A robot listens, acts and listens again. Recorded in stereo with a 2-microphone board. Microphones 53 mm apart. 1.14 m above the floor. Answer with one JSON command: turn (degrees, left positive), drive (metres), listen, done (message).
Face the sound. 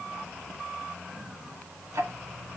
{"turn": -90}
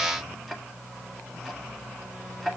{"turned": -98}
{"done": "Found it: ticking, straight ahead."}